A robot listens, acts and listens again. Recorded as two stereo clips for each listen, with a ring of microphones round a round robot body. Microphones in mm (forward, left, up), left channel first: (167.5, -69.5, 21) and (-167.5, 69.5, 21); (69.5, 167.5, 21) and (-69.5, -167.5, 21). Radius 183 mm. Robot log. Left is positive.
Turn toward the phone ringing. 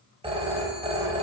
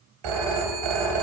note: The phone ringing: 125° right.
cmd yaw -125
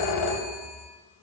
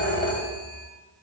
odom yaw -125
end: Facing the phone ringing, 1 to 2 m away.